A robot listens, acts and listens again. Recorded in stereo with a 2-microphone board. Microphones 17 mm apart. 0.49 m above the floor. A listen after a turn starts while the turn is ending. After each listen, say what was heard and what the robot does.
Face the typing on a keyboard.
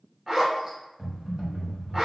The typing on a keyboard: about 75° right or 105° right. Turn 75° right.
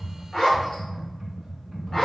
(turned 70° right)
So it is at 35° right. Turn 35° right.
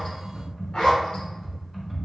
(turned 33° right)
Found it: typing on a keyboard, straight ahead.